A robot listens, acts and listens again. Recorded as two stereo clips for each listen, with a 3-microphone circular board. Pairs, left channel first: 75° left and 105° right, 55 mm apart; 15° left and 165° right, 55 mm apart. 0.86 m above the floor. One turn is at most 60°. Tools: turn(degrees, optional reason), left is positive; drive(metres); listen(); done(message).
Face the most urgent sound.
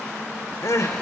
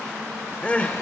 turn(degrees=60, reason="The crying: 80° left.")
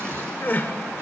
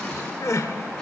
turn(degrees=25, reason="The crying is now 25° left.")
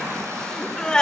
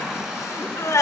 done("Facing the crying, 1 to 2 m away.")